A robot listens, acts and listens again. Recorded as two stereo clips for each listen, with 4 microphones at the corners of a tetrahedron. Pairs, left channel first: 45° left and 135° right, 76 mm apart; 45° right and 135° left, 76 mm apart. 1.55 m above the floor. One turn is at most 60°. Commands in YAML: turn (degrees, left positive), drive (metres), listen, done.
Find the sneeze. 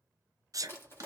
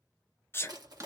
turn: -60
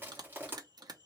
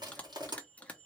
turn: -40
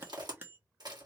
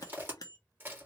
done: "Facing where the sneeze came from. I can't hear it now."